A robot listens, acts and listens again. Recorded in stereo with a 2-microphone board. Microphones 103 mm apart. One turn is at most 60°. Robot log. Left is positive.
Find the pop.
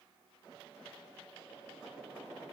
cmd idle
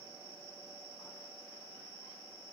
cmd idle
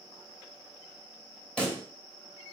cmd yaw +30
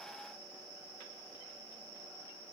cmd idle
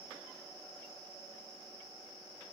end: I heard a pop, but can't make it out now. It was about 20° right or 140° left.